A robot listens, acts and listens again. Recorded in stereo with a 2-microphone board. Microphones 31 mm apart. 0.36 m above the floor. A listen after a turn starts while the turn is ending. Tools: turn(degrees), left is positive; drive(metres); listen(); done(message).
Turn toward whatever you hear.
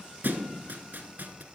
turn(degrees=-90)
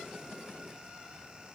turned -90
done("Facing where the thud came from. I can't hear it now.")